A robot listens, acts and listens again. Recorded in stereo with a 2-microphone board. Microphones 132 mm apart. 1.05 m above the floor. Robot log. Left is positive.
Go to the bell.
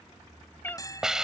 note: The bell: about 30° left or 150° left.
cmd yaw +30
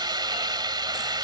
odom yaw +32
cmd idle
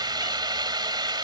cmd idle
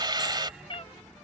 end: I heard a bell, but can't make it out now. It was about 5° right or 120° left. I did not reach it.